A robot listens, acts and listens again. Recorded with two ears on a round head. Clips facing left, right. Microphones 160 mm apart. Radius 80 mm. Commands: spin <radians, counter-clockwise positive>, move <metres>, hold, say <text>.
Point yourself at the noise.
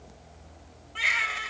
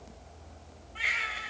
spin 1.22
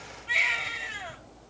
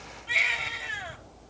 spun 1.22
say Facing the baby crying.